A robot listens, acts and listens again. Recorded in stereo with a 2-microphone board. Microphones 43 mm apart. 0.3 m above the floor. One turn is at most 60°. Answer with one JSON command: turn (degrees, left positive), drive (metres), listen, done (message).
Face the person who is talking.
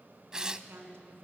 {"turn": -60}
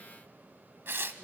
{"listen": true}
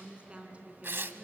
{"turn": -30}
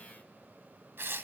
{"listen": true}
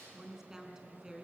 {"turn": -10}
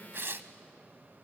{"listen": true}
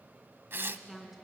{"done": "Found it: a woman speaking, straight ahead."}